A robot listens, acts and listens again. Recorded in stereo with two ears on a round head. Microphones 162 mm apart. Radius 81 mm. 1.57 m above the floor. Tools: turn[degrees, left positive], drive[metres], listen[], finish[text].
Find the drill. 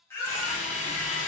Thought: The drill: about 45° left or 135° left.
Action: turn[45]
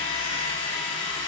Thought: So it is at 90° left.
Action: turn[90]
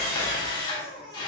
Thought: The drill is now 25° left.
Action: turn[25]
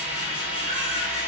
Action: finish[Found it: a drill, straight ahead.]